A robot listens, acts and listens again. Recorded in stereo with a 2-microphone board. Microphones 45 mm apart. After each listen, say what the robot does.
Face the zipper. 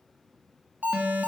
Keep listening.
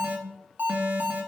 Keep listening.
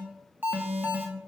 I can't make out a zipper to turn to.